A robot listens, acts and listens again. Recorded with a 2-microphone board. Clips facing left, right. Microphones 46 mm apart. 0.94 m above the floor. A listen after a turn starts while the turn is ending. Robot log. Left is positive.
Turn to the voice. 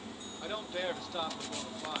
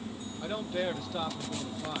cmd yaw +30
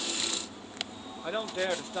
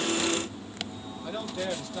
note: So it is at 145° left.
cmd yaw +145
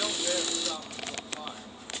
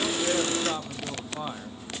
cmd idle
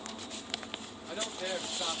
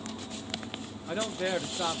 note: The man speaking is now 30° right.
cmd yaw -30
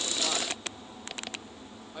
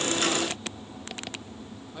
cmd idle
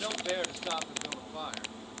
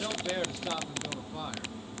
end: Facing the man speaking.